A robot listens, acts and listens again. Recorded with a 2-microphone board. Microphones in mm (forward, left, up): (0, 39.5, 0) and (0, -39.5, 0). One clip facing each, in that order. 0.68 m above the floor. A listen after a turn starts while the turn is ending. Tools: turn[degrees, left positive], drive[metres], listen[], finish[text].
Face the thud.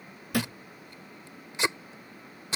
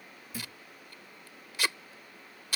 Thought: The thud: about 75° left or 105° left.
Action: turn[75]
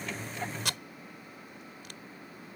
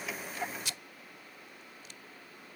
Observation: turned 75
Action: listen[]
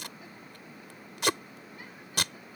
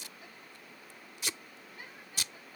Action: finish[I heard a thud, but can't make it out now. It was about straight ahead or 30° left.]